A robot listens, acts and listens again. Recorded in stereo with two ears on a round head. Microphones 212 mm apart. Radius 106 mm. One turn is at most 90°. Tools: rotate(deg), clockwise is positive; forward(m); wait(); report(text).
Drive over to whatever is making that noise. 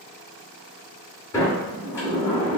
rotate(-30)
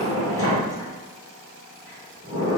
rotate(15)
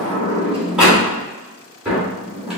forward(1.0)
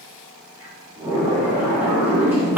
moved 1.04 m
rotate(10)
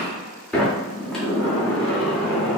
forward(1.0)
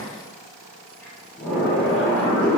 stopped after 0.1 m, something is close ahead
report("I am next to the sliding door.")